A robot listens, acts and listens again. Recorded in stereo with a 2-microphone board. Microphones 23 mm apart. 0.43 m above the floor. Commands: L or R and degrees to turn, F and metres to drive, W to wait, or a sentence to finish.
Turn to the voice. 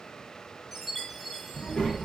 L55
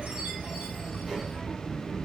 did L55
R35
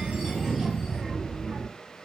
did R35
R20
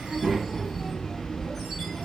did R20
Facing the child speaking.